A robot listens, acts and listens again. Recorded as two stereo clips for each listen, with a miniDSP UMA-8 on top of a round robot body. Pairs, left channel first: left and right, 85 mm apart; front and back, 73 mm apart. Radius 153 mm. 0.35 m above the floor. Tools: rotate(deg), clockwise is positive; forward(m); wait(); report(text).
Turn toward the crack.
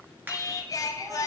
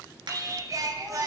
rotate(160)
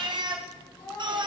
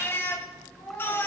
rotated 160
report("Facing where the crack came from. I can't hear it now.")